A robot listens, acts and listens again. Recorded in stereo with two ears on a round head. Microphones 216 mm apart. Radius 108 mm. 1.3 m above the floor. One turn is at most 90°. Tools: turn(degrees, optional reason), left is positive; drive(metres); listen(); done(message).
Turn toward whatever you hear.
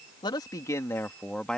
turn(degrees=30)
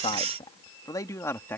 turn(degrees=30)
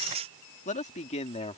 turn(degrees=90, reason="So it is at 155° left.")
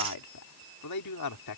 turn(degrees=85, reason="The man speaking is now 85° left.")
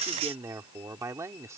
turn(degrees=-15, reason="The man speaking is now 15° right.")
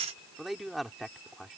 done("Facing the man speaking.")